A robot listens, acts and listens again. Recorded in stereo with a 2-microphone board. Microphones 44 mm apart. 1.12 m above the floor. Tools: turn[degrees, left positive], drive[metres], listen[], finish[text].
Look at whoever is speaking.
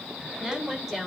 Action: turn[-30]
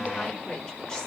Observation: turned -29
Action: listen[]
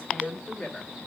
Thought: So it is at 20° left.
Action: turn[20]
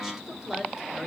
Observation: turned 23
Action: finish[Facing the woman speaking, 2 to 4 m away.]